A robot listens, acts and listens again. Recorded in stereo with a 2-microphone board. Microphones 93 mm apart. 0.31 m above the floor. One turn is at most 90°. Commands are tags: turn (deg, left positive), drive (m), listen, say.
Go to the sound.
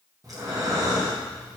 <turn deg="-40"/>
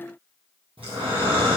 <turn deg="-90"/>
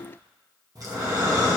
<turn deg="-45"/>
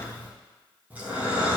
<turn deg="-15"/>
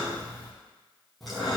<drive m="1.0"/>
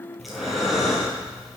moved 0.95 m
<drive m="1.0"/>
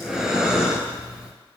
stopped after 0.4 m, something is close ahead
<say>I am next to the breathing.</say>